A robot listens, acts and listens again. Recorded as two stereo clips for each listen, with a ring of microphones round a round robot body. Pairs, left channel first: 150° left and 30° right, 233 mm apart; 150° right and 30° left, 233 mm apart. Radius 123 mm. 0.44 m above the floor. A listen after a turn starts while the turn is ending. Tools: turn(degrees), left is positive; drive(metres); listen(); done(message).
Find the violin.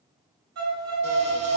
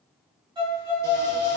turn(degrees=-40)
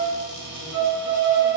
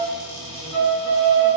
done("Found it: a violin, straight ahead, 1 to 2 m away.")